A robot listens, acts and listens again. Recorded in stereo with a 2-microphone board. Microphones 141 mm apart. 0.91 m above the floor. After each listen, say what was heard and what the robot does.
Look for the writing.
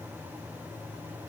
Keep listening.
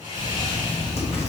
The writing: about 50° left or 130° left. Turn 50° left.
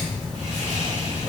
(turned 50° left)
Found it: writing, straight ahead, 1 to 2 m away.